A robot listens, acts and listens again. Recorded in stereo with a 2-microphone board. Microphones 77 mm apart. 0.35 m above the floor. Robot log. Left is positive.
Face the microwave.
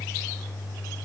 cmd idle
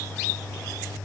cmd idle
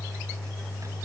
end: I can't make out a microwave.